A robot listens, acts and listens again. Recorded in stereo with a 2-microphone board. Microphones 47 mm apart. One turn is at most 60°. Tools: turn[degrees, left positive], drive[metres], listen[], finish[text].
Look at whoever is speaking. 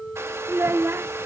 Thought: The child speaking: about 60° right or 120° right.
Action: turn[-60]
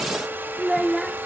Action: finish[Facing the child speaking.]